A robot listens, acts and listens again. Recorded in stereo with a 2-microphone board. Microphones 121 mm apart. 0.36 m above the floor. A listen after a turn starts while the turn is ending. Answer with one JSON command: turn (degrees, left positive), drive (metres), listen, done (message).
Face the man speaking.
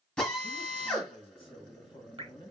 {"turn": 45}
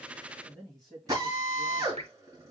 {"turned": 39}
{"done": "Facing the man speaking."}